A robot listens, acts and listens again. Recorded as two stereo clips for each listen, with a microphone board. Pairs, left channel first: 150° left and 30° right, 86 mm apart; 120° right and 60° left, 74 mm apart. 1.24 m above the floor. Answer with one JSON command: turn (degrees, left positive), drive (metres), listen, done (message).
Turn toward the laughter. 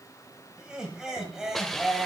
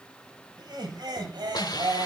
{"turn": 55}
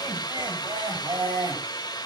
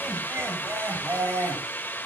{"done": "Facing the laughter."}